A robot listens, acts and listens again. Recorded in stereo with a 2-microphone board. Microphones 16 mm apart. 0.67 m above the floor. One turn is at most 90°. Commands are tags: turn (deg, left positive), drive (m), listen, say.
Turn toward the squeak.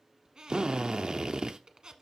<turn deg="-60"/>
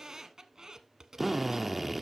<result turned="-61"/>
<turn deg="-45"/>
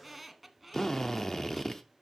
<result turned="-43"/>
<say>Facing the squeak.</say>